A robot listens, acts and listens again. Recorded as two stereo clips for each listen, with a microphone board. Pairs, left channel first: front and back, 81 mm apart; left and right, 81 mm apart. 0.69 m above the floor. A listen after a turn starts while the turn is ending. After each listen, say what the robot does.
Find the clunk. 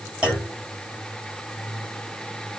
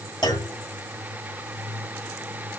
Turn 100° left.
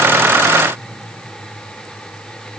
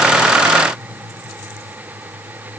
I heard a clunk from this way, but can't make it out now.